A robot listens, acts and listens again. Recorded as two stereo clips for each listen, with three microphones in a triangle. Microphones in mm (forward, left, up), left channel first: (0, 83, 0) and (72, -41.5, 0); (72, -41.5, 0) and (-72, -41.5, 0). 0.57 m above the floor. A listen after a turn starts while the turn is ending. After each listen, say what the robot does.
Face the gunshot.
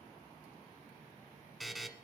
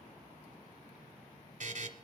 Keep listening.
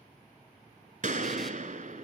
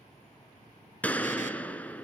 Turn 80° right.
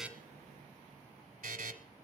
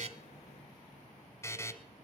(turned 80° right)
Facing where the gunshot came from. I can't hear it now.